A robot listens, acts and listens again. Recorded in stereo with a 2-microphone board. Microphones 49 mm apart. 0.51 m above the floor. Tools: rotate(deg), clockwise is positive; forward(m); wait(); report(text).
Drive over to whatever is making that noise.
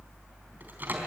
rotate(40)
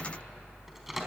wait()
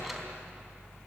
wait()
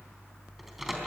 report("I heard a microwave, but can't make it out now. It was about straight ahead or 100° right. I did not reach it.")